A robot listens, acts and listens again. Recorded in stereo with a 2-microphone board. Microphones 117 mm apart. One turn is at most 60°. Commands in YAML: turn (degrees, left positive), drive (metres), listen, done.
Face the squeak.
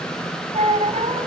turn: -60
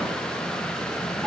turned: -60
listen: true
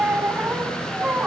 turn: -15
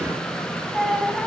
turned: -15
done: "Facing the squeak."